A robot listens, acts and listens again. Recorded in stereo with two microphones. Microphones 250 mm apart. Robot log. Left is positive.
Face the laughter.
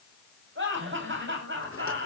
note: The laughter: about 50° right or 130° right.
cmd yaw -50
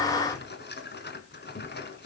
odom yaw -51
cmd idle
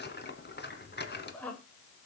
end: Found it: laughter, straight ahead.